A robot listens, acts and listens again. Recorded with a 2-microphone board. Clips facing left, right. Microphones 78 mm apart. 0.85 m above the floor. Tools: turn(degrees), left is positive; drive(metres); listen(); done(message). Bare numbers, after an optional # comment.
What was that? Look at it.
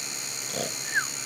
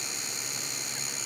turn(90)
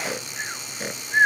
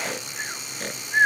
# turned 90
done("Found it: snoring, straight ahead.")